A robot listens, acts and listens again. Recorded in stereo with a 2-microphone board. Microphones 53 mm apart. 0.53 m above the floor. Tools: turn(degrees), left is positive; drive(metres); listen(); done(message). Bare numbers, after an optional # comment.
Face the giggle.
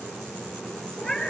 listen()
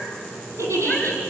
# The giggle: about 75° right or 105° right.
turn(-75)
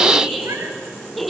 done("Facing the giggle, over 4 m away.")